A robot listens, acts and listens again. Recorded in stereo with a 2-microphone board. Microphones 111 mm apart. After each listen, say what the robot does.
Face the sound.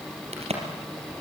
Turn 70° right.
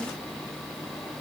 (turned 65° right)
Keep listening.
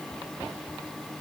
I heard a crack, but can't make it out now. It was about 5° right or 45° right.